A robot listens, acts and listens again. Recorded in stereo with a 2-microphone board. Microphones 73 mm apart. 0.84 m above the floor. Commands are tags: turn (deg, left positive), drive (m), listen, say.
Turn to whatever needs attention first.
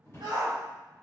<turn deg="-60"/>
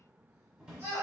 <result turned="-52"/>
<turn deg="-45"/>
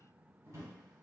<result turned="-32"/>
<turn deg="-10"/>
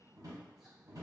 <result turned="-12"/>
<listen/>
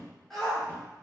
<say>Facing the shout.</say>